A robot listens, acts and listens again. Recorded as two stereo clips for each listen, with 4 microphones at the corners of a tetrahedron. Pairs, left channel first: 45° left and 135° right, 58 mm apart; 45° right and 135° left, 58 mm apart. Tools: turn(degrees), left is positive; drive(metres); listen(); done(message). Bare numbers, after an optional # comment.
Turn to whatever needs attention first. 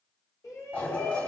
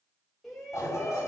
# The shout: 40° left.
turn(40)
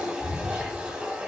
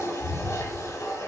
listen()
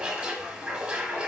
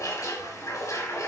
listen()
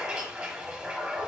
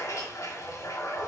done("Facing where the shout came from. I can't hear it now.")